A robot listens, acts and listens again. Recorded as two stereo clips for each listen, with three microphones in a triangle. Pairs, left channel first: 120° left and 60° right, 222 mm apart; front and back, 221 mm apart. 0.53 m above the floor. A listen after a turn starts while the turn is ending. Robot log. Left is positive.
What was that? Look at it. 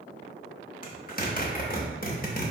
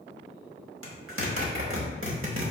note: The zipper: 170° left.
cmd yaw +170
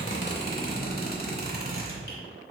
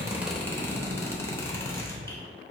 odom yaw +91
note: The zipper is now 80° left.
cmd yaw +80
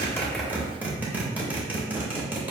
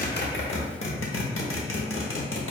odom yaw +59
note: The zipper is now 20° left.
cmd yaw +20
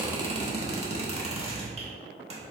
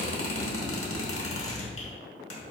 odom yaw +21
end: Found it: a zipper, straight ahead.